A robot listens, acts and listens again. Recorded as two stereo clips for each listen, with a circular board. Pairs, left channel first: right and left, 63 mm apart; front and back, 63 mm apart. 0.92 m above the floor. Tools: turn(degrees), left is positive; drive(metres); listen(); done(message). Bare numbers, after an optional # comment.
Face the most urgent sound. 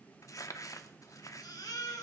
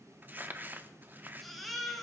# The baby crying: 85° right.
turn(-85)
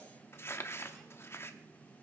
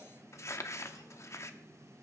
listen()
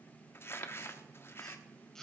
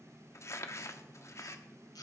# The baby crying is now 10° right.
turn(-10)
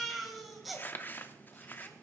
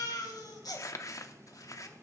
done("Found it: a baby crying, straight ahead.")